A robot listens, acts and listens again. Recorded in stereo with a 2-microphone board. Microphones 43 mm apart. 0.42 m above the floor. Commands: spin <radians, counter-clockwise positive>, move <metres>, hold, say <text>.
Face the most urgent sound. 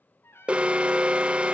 spin -0.44
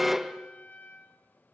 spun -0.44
spin -0.17
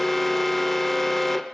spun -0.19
say Facing the alarm, under 1 m away.